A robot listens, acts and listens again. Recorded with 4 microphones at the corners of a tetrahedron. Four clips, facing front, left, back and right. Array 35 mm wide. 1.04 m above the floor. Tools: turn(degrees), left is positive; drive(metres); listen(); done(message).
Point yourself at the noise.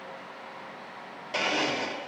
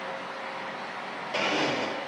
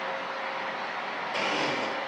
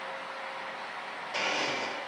turn(degrees=40)
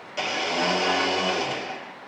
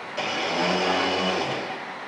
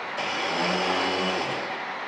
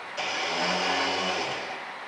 turn(degrees=30)
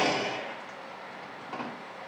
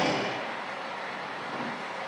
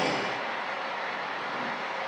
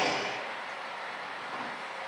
turn(degrees=10)
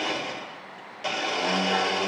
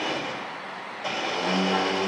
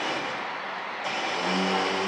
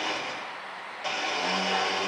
done("Facing the blender, 1 to 2 m away.")